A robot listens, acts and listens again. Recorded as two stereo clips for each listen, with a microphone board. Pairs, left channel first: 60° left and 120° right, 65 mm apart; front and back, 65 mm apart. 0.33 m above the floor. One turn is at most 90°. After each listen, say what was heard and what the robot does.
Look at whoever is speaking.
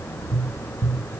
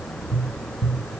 Keep listening.
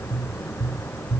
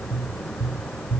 Keep listening.
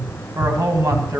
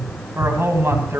The man speaking: 135° right. Turn 90° right.
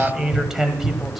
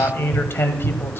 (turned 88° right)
The man speaking is now 40° right. Turn 40° right.
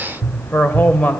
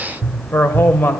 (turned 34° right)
The man speaking is now 15° left. Turn 15° left.
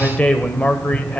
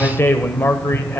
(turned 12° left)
Found it: a man speaking, straight ahead.